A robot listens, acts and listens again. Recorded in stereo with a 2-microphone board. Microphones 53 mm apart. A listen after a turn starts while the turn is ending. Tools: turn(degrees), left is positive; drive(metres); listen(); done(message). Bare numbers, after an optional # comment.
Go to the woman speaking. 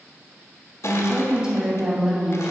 turn(-30)
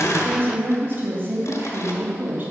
# So it is at 140° right.
turn(-140)
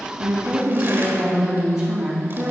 # The woman speaking is now 15° right.
turn(-15)
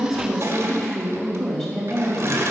drive(1.0)
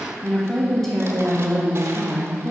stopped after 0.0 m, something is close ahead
done("Something is in my way. I am facing the woman speaking but have not reached it.")